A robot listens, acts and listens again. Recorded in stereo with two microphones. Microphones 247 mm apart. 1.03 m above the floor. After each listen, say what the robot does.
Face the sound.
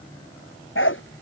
Turn 55° left.
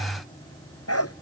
Turn 75° left.
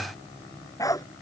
Turn 15° left.
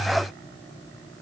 Keep listening.
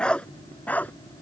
Found it: a dog barking, straight ahead.